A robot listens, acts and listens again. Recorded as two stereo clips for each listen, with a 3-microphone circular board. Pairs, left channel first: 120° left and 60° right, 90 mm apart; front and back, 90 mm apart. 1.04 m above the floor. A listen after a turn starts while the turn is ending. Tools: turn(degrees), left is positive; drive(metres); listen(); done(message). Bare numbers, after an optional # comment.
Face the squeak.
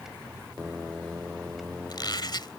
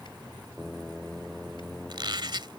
# The squeak: 155° left.
turn(155)
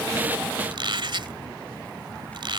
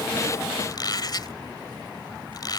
# The squeak is now 40° right.
turn(-40)
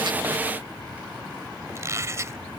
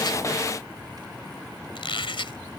done("Found it: a squeak, straight ahead.")